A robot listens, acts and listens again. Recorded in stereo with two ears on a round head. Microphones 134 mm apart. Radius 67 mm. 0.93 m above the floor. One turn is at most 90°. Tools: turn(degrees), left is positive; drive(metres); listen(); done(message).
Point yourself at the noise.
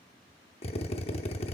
turn(degrees=45)
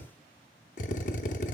turn(degrees=80)
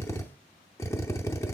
turn(degrees=25)
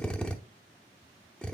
done("Facing the drill, under 1 m away.")